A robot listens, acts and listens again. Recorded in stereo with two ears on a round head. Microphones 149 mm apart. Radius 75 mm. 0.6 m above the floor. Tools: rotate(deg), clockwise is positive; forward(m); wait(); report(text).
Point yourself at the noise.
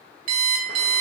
rotate(50)
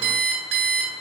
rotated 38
rotate(90)
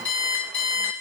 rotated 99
rotate(-10)
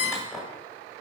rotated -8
report("Found it: an alarm clock, straight ahead, 1 to 2 m away.")